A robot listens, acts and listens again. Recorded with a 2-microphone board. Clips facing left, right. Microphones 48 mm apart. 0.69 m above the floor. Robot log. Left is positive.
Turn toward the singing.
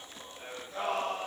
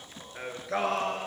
cmd yaw -90
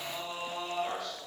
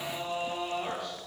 note: So it is at 10° right.
cmd yaw -10
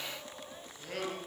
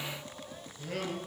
end: Found it: singing, straight ahead, over 4 m away.